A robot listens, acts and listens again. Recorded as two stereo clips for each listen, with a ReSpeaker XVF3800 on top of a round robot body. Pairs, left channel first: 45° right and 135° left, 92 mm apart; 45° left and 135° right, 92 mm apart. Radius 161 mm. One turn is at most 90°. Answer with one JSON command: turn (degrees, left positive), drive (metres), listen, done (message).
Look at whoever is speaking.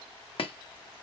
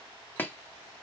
{"listen": true}
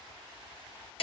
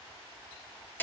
{"listen": true}
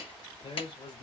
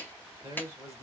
{"turn": -75}
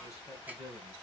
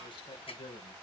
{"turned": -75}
{"turn": 10}
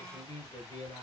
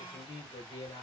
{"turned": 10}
{"done": "Facing the man speaking."}